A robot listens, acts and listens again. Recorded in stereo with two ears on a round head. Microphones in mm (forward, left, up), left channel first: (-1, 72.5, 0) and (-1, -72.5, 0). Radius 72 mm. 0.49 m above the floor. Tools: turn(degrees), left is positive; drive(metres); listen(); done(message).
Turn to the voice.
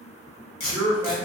turn(degrees=30)
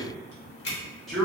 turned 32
done("Facing the man speaking.")